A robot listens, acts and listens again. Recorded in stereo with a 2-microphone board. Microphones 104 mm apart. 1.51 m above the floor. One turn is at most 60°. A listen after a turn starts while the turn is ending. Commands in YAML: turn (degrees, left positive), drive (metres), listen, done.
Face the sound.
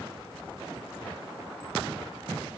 listen: true
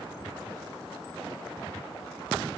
listen: true
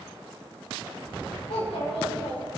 turn: 60
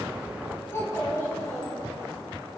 turn: 30
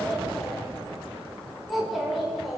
done: "Facing the child speaking, over 4 m away."